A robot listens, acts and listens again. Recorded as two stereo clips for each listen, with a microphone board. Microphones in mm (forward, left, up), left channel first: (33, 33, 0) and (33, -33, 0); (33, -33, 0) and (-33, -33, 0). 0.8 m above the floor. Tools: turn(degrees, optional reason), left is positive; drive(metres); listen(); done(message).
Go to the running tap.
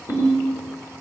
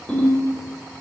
listen()
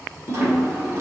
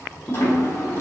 turn(degrees=-50, reason="The running tap: 50° right.")
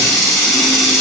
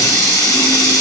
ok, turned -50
drive(metres=1.0)
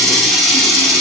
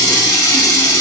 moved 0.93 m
drive(metres=1.0)
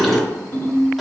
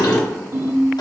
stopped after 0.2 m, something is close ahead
done("Arrived at the running tap, straight ahead.")